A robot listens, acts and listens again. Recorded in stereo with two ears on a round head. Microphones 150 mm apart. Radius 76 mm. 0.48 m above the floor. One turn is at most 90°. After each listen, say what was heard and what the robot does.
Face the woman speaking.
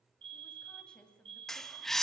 Turn 30° left.
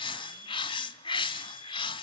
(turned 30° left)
Keep listening.
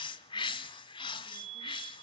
Keep listening.
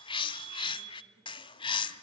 I heard a woman speaking, but can't make it out now. It was about 25° right or 145° left.